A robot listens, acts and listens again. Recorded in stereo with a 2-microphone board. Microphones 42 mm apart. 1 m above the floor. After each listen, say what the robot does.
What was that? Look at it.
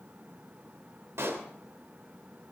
Turn 90° right.
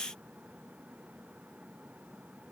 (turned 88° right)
Facing where the pop came from. I can't hear it now.